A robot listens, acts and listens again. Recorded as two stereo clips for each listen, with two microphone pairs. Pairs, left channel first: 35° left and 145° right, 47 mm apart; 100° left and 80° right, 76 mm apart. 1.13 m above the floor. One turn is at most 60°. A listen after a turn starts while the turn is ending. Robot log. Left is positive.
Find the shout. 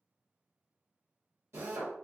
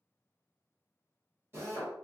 cmd idle
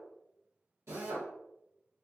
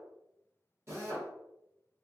cmd idle
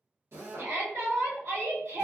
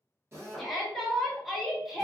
note: The shout: 170° right.
cmd yaw -60
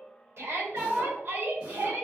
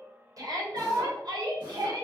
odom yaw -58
note: The shout is now 110° right.
cmd yaw -60
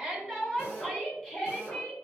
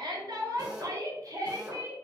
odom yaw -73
note: The shout is now 40° right.
cmd yaw -40
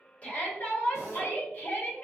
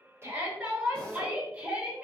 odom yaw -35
end: Facing the shout, 1 to 2 m away.